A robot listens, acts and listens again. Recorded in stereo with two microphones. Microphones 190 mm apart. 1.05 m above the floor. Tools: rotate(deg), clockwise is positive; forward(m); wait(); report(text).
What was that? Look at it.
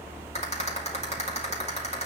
rotate(-35)
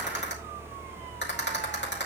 rotate(-110)
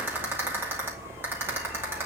rotate(10)
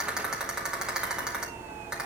report("Facing the rattle, 2 to 4 m away.")